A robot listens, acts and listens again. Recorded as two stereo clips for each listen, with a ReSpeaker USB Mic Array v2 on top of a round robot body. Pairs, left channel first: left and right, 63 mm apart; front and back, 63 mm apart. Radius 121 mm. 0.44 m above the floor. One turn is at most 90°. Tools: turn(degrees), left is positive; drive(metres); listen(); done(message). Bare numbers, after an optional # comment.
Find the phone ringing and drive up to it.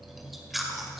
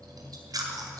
listen()
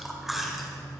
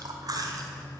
listen()
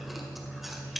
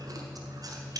done("I can't make out a phone ringing, only chewing.")